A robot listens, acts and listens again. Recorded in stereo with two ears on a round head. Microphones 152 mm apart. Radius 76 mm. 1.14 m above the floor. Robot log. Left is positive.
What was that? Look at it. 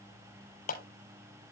note: The clap: about 55° left or 125° left.
cmd yaw +55
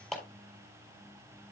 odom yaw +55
end: Facing the clap, 2 to 4 m away.